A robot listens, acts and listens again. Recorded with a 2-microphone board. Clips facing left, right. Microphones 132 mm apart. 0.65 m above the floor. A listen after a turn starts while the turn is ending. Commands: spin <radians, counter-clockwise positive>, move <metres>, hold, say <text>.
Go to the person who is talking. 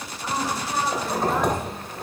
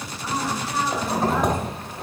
spin 0.96
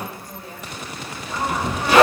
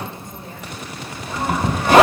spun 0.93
hold
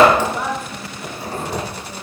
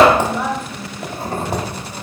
spin 0.26
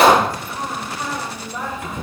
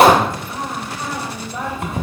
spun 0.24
move 1.0
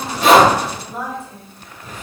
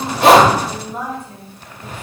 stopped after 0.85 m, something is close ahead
say I am next to the woman speaking.